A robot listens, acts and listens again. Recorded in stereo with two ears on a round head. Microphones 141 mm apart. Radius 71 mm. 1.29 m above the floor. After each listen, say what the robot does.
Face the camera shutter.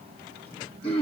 Keep listening.
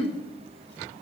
Keep listening.
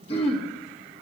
I can't make out a camera shutter, only throat clearing.